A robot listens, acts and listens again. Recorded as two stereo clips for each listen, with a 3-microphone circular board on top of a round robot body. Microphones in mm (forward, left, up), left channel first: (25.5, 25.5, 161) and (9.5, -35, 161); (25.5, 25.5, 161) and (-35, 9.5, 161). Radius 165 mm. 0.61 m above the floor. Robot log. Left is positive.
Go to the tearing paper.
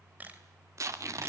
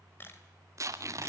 note: The tearing paper: 135° right.
cmd yaw -135
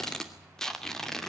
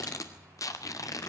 cmd fwd 1.0
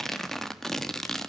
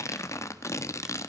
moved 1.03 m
cmd fwd 1.0
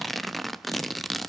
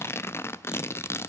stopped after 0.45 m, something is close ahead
note: The tearing paper is now 10° right.
cmd yaw -10
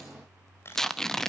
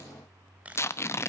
end: Arrived at the tearing paper, straight ahead.